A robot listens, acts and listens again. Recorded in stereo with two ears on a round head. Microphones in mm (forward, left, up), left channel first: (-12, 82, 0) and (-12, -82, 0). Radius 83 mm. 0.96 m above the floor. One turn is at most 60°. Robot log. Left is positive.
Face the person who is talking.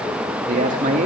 note: The man speaking: about 40° right or 140° right.
cmd yaw -40
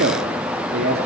note: So it is at 115° right.
cmd yaw -60
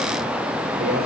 note: The man speaking is now 55° right.
cmd yaw -55
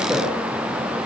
end: Facing the man speaking.